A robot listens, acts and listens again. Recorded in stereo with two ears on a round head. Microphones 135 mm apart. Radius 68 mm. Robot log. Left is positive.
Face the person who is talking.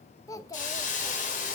note: The child speaking: about 20° left or 160° left.
cmd yaw +20
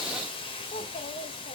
note: So it is at 135° left.
cmd yaw +135
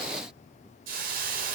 cmd idle
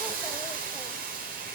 cmd idle
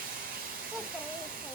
end: I heard a child speaking from this way, but can't make it out now.